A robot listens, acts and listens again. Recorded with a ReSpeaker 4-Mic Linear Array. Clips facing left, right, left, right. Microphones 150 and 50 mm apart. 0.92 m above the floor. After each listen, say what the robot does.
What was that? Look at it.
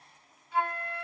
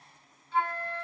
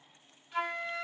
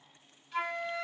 Turn 30° left.
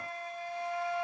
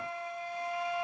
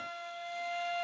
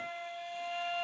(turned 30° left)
Turn 20° right.
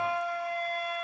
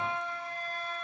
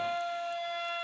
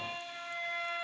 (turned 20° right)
Found it: a flute, straight ahead.